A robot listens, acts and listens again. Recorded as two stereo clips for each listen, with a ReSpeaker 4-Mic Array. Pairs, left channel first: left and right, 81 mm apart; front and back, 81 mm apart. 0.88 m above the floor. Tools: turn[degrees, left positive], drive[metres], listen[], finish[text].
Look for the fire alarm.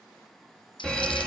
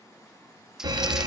Thought: The fire alarm: 170° left.
Action: turn[170]
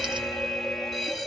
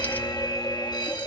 Action: finish[Found it: a fire alarm, straight ahead, 2 to 4 m away.]